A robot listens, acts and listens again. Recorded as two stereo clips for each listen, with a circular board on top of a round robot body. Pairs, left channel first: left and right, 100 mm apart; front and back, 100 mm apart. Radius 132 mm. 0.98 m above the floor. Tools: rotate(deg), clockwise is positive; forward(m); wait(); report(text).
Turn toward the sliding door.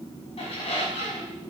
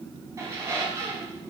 wait()
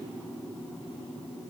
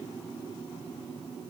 wait()
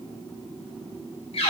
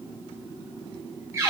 report("I can't make out a sliding door to turn to.")